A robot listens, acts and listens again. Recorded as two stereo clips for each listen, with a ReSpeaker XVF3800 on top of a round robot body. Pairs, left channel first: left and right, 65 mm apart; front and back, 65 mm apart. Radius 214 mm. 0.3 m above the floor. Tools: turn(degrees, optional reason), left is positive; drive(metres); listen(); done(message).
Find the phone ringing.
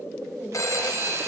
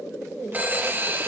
turn(degrees=120, reason="The phone ringing: 120° left.")
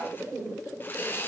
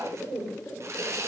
listen()
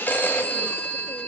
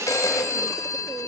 turn(degrees=30, reason="The phone ringing is now 30° left.")
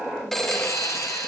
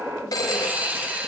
done("Facing the phone ringing, 1 to 2 m away.")